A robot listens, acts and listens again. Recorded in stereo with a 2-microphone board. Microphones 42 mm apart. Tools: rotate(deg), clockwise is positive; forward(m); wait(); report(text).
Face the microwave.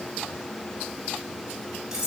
wait()
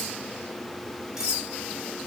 wait()
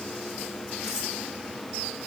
report("I can't make out a microwave to turn to.")